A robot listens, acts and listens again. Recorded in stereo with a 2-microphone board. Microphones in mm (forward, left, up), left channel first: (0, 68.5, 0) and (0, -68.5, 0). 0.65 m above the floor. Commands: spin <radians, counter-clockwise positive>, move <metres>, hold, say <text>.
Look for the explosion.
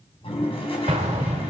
spin -1.05
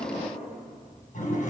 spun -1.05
hold
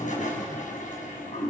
say I heard an explosion, but can't make it out now. It was about straight ahead or 60° right.